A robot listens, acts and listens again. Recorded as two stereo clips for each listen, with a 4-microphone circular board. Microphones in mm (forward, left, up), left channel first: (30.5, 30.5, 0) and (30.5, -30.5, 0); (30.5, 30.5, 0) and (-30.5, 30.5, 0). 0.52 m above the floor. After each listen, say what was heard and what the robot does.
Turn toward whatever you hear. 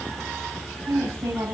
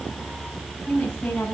The woman speaking: 70° right. Turn 70° right.
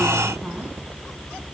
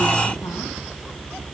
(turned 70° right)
Keep listening.
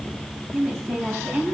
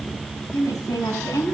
The woman speaking is now 25° right. Turn 25° right.
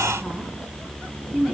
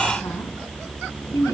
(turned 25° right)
The woman speaking is now 15° right. Turn 15° right.
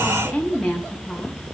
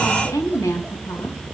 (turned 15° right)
Facing the woman speaking.